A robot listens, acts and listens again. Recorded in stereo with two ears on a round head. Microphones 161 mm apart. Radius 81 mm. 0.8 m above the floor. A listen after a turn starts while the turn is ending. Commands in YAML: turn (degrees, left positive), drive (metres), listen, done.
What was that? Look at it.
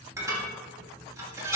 turn: -15
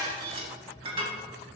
turn: -145
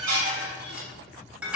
done: "Found it: dishes clattering, straight ahead."